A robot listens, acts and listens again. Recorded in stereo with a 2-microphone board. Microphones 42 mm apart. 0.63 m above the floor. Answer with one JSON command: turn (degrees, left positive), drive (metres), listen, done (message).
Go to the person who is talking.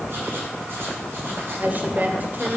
{"turn": -45}
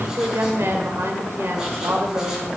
{"turn": -90}
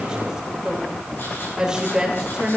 {"turn": -15}
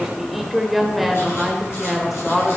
{"drive": 1.0}
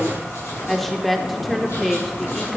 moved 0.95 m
{"drive": 1.0}
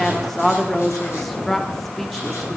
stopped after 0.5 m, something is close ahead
{"turn": 10}
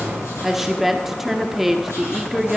{"done": "Arrived at the woman speaking, straight ahead."}